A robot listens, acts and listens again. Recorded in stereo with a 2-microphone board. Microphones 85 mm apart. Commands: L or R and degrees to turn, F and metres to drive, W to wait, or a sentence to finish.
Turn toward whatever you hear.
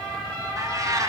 R40
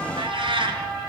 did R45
R100
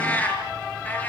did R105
L20
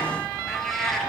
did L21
Facing the cat meowing, over 4 m away.